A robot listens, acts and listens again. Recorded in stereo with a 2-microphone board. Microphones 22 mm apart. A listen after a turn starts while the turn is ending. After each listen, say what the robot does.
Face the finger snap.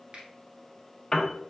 Turn 55° right.
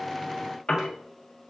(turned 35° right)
Keep listening.
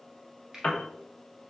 Turn 20° right.
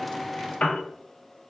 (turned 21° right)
Facing the finger snap, 1 to 2 m away.